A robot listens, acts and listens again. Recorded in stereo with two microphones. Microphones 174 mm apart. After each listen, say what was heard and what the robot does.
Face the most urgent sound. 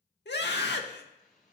Turn 90° left.
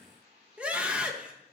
Found it: a scream, straight ahead.